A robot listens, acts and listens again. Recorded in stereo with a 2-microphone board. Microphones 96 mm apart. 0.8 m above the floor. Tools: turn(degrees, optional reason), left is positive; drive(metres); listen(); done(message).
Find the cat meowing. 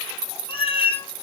turn(degrees=70, reason="The cat meowing: about 70° left or 110° left.")
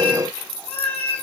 turn(degrees=15, reason="So it is at 15° left.")
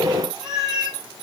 done("Facing the cat meowing.")